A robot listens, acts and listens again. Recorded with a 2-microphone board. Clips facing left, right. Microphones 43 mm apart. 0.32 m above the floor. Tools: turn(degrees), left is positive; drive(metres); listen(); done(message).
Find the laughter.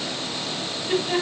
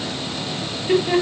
turn(degrees=-45)
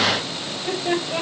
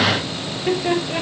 turn(degrees=-80)
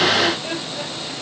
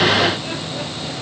listen()
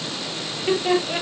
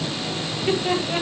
done("Facing the laughter, over 4 m away.")